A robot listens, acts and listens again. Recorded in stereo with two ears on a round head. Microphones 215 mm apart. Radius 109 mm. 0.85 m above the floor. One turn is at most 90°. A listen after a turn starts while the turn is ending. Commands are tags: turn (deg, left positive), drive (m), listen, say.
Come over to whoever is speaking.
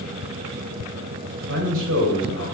<turn deg="-55"/>
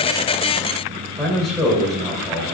<drive m="1.0"/>
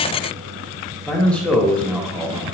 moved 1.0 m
<drive m="1.0"/>
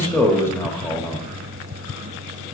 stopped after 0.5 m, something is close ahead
<turn deg="10"/>
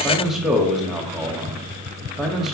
<say>I am next to the man speaking.</say>